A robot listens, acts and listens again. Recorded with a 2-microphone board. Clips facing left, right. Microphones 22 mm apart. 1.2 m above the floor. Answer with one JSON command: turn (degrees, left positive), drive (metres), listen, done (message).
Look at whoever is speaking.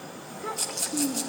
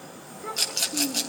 {"turn": 20}
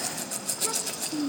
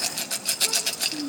{"turn": 135}
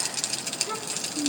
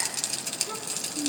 {"turn": 25}
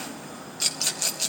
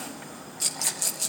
{"listen": true}
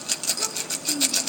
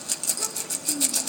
{"done": "Found it: a child speaking, straight ahead."}